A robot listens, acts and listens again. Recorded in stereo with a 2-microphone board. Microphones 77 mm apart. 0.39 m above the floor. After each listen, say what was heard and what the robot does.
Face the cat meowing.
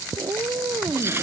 The cat meowing: about 55° right or 125° right. Turn 55° right.
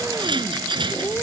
So it is at 15° left. Turn 15° left.
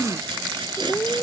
The cat meowing is now 20° left. Turn 20° left.
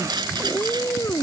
The cat meowing is now 30° left. Turn 30° left.
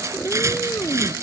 The cat meowing is now 25° left. Turn 25° left.
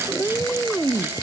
The cat meowing is now 15° left. Turn 15° left.
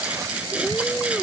Facing the cat meowing.